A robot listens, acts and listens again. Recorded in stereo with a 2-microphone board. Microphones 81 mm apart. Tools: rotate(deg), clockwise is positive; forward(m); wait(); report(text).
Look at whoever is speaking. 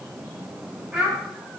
rotate(30)
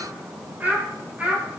rotate(20)
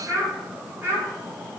rotate(150)
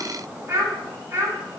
rotate(40)
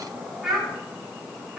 report("Found it: a child speaking, straight ahead.")